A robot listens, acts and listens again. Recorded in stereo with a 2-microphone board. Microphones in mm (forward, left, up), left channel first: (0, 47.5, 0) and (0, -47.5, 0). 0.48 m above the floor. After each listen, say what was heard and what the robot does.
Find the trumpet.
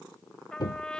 Turn 30° left.
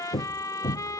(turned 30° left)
So it is at 140° left. Turn 140° left.
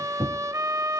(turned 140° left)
The trumpet is now 35° right. Turn 35° right.
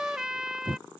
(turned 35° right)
Facing the trumpet.